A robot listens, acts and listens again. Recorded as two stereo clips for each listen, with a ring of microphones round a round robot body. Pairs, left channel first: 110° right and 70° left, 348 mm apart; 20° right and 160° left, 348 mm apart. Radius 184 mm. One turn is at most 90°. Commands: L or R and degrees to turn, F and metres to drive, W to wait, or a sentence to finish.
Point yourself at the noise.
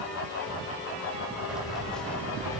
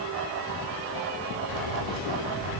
R35
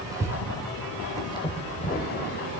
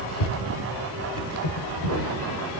R60
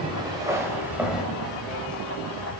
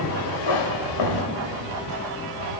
R25
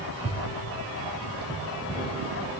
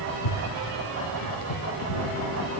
Facing the keys jangling, 1 to 2 m away.